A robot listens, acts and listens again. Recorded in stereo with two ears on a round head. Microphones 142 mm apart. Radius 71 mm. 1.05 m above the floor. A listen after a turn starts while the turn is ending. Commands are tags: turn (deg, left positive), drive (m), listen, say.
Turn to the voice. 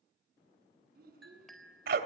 <turn deg="-60"/>
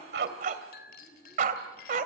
<say>Facing the child speaking, over 4 m away.</say>